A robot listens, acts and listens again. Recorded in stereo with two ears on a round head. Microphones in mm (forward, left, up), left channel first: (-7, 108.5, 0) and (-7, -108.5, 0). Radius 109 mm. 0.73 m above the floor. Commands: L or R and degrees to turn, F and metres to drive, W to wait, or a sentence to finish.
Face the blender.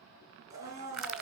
R30
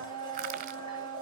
L20
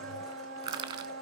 Facing the blender, 2 to 4 m away.